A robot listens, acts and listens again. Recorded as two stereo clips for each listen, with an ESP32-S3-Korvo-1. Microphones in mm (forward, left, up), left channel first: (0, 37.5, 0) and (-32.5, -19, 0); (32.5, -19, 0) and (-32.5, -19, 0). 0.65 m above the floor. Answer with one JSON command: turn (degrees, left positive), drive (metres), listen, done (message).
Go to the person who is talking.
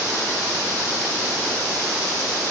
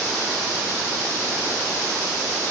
{"listen": true}
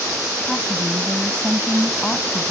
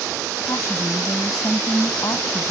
{"turn": -15}
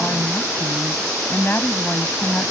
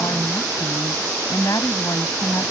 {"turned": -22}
{"drive": 1.0}
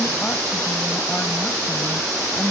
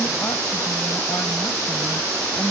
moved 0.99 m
{"drive": 1.0}
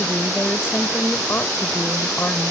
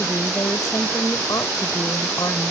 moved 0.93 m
{"turn": 10}
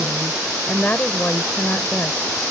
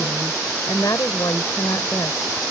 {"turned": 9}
{"drive": 1.0}
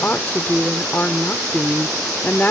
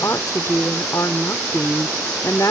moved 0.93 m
{"turn": 10}
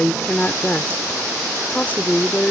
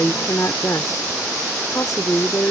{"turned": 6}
{"drive": 1.0}
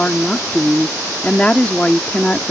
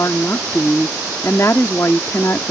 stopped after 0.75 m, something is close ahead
{"done": "Arrived at the woman speaking, straight ahead."}